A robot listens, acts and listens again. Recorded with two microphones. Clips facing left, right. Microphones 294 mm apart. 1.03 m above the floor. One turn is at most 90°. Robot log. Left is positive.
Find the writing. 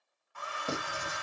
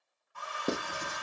note: The writing: about 70° right or 110° right.
cmd yaw -70
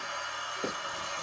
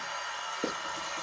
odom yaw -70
note: So it is at 35° right.
cmd yaw -35
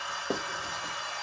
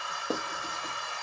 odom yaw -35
end: Facing the writing, under 1 m away.